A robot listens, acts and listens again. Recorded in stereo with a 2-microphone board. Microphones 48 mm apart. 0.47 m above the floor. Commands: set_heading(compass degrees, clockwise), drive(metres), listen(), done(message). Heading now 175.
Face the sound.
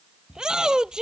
set_heading(190)
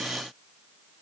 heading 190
listen()
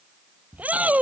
set_heading(335)
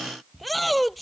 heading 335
done("Facing the shout.")